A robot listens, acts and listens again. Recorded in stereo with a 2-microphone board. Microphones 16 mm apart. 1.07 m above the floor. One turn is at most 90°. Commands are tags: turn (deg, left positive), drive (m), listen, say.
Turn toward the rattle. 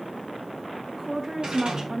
<turn deg="-70"/>
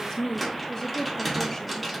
<say>Facing the rattle, 1 to 2 m away.</say>